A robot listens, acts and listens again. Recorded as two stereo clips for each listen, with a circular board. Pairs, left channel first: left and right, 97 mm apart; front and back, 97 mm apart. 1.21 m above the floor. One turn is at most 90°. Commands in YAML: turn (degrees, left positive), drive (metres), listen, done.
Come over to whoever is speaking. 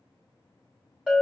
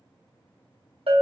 listen: true
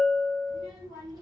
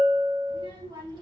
turn: -90
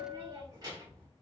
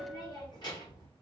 turn: -40
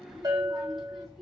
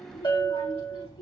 drive: 1.0
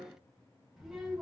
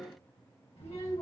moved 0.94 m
drive: 1.0
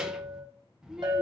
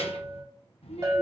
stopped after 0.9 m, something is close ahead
done: "I am next to the child speaking."